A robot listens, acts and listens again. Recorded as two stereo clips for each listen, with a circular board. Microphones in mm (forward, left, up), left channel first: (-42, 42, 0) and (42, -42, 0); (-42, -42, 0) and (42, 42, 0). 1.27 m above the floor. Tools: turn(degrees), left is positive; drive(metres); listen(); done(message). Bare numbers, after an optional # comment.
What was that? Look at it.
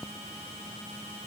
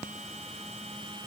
listen()
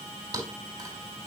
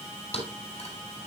# The thud: 100° right.
turn(-100)
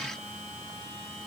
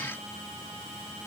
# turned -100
done("Facing where the thud came from. I can't hear it now.")